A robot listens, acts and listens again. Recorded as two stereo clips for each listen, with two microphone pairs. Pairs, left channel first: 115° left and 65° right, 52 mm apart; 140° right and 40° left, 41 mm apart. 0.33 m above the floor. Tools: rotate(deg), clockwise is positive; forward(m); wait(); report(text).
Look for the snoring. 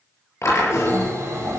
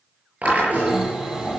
rotate(40)
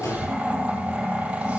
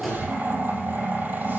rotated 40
report("Found it: snoring, straight ahead.")